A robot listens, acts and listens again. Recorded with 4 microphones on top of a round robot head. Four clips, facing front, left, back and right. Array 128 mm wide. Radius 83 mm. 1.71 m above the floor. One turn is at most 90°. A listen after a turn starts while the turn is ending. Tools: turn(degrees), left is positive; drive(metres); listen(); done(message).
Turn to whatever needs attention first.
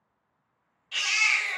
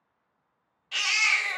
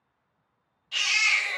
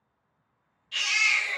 turn(degrees=90)
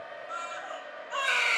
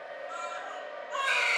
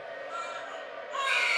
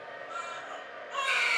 turn(degrees=40)
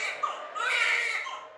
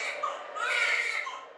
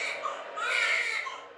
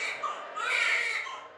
turn(degrees=25)
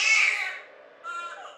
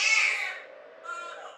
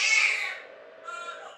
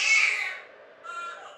turn(degrees=15)
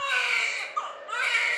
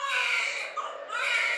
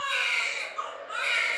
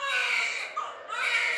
done("Facing the baby crying.")